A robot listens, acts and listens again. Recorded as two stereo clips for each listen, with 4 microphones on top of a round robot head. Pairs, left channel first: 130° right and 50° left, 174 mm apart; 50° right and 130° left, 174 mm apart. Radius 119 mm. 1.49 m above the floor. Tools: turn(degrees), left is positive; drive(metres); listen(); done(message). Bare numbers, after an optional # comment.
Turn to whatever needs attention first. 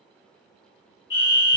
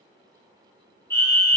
# The fire alarm: 125° right.
turn(-125)
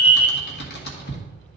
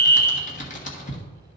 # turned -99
# The fire alarm is now 30° right.
turn(-30)
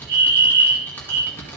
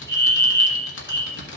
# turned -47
# The fire alarm is now 20° left.
turn(20)
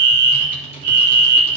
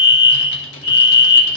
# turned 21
done("Facing the fire alarm.")